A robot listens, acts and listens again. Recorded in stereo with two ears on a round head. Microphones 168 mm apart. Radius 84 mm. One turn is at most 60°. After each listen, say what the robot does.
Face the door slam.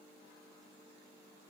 Keep listening.
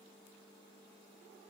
Keep listening.
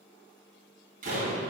Turn 45° right.
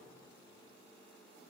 Keep listening.
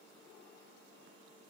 I heard a door slam, but can't make it out now. It was about straight ahead or 90° right.